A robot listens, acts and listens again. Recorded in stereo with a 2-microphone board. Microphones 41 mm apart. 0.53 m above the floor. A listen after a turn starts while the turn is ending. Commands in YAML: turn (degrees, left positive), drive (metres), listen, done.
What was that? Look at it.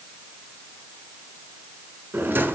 turn: -55
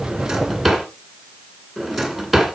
done: "Facing the drawer, 2 to 4 m away."